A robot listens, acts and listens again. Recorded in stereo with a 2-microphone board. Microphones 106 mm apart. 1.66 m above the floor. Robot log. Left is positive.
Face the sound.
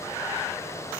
cmd idle
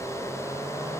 cmd idle
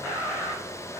end: I can't make out anything.